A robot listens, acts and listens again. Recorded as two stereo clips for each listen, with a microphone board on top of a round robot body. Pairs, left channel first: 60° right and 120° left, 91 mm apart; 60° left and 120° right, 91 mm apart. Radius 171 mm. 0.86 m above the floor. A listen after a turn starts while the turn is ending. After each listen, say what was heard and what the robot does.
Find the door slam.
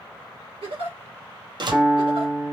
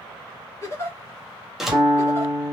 The door slam: 155° left. Turn 155° left.
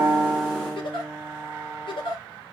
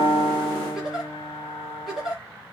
Facing where the door slam came from. I can't hear it now.